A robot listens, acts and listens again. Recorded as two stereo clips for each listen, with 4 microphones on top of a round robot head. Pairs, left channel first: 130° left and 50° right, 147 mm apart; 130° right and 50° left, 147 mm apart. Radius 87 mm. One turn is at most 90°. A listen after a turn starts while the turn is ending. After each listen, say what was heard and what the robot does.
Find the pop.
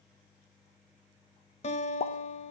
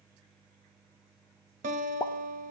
The pop: 170° left. Turn 90° left.
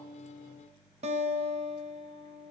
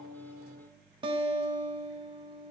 Nothing new. It was at 80° left. Turn 80° left.
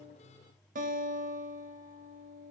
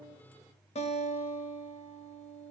I heard a pop from this way, but can't make it out now.